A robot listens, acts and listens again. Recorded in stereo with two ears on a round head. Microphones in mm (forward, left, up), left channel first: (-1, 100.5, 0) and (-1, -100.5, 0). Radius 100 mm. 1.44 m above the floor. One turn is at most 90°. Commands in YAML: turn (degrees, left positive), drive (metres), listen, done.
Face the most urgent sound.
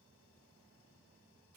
listen: true
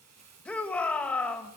turn: 30
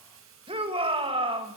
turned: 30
turn: -25
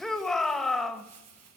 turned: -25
done: "Facing the shout, 2 to 4 m away."